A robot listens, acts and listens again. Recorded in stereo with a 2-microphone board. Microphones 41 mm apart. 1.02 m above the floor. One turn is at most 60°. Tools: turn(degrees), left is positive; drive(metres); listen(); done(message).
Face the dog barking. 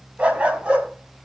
turn(degrees=-30)
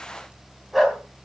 done("Facing the dog barking, 2 to 4 m away.")